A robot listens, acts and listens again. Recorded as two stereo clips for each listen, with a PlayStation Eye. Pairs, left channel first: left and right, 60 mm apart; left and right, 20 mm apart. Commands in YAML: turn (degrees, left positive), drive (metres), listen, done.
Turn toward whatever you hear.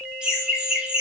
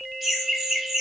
turn: -15
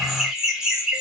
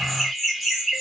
turn: -30
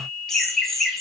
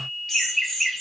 done: "Found it: laughter, straight ahead."